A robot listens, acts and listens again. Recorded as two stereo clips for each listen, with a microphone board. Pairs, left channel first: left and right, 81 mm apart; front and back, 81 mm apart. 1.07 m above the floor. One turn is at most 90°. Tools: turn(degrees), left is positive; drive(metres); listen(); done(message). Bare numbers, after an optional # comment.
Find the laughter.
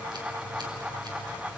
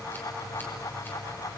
listen()
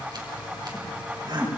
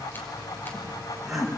# The laughter: 90° right.
turn(-90)
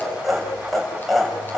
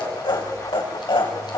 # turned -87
done("Found it: laughter, straight ahead, over 4 m away.")